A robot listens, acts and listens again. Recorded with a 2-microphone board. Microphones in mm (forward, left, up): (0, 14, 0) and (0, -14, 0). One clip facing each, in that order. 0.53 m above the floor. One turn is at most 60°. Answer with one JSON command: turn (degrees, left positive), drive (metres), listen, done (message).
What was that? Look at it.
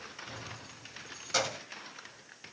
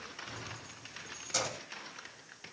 {"turn": 30}
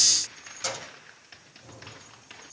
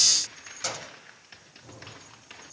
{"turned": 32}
{"done": "Found it: keys jangling, straight ahead, 2 to 4 m away."}